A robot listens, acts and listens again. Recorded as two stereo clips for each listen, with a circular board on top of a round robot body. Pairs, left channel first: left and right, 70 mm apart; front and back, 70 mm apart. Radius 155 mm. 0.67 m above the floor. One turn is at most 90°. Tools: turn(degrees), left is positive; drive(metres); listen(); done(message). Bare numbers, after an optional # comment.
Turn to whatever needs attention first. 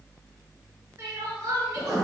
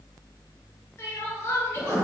# The crying: 55° right.
turn(-55)
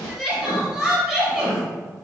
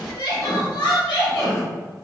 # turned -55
# The crying is now 15° right.
turn(-15)
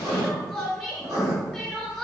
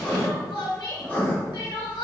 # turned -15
done("Found it: crying, straight ahead.")